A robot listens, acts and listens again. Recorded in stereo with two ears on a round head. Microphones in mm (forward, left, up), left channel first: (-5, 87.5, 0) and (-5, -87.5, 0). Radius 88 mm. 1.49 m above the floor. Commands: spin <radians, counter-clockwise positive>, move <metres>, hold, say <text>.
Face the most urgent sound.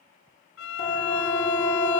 spin 0.52
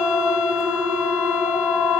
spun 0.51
say Facing the siren.